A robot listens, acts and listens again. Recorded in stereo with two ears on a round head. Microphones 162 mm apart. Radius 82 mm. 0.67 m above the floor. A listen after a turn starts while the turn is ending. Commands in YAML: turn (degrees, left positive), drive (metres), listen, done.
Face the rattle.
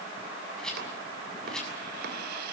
turn: 30
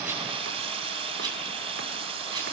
listen: true
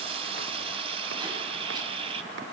listen: true
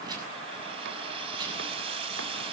done: "I heard a rattle, but can't make it out now. It was about 25° right or 145° left."